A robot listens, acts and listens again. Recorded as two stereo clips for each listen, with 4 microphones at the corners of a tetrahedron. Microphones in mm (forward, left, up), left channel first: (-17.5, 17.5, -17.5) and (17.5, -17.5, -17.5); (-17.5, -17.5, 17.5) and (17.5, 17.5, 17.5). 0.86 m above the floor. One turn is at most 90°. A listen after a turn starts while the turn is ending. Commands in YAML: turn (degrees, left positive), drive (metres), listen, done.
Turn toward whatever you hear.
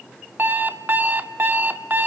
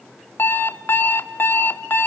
turn: -90
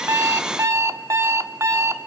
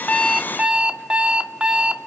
turn: -20
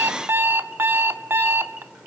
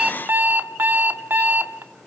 done: "Found it: an alarm clock, straight ahead."